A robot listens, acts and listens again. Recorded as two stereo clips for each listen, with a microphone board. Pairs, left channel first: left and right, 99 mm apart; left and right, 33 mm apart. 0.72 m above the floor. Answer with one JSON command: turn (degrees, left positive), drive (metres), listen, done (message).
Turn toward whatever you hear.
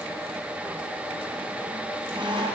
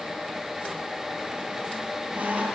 {"turn": -60}
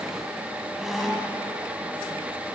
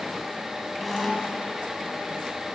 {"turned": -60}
{"done": "Found it: a squeak, straight ahead, 1 to 2 m away."}